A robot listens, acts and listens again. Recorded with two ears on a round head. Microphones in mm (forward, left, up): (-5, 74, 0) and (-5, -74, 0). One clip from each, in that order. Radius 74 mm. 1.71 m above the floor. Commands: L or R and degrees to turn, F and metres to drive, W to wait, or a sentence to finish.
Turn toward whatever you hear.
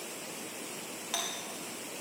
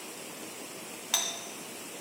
R40
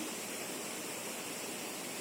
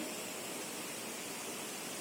W
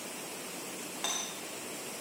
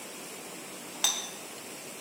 R100
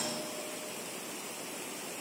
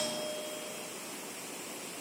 R45
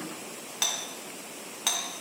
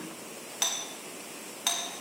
Facing the doorbell, 2 to 4 m away.